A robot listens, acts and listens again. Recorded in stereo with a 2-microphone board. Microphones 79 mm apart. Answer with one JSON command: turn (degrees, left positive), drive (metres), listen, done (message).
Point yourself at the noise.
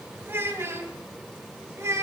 {"turn": -40}
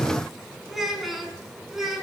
{"done": "Facing the child speaking, 2 to 4 m away."}